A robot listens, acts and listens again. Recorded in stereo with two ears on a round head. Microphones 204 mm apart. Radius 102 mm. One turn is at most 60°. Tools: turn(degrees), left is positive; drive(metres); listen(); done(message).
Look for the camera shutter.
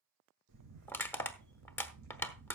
turn(degrees=-60)
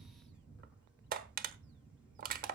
done("Facing the camera shutter, over 4 m away.")